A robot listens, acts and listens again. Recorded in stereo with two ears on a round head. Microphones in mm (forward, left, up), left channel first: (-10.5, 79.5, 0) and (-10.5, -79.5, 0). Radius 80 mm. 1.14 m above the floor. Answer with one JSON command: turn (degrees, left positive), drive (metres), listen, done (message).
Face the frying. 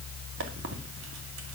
{"listen": true}
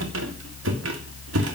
{"listen": true}
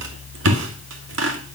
{"done": "I can't make out frying, only a squeak."}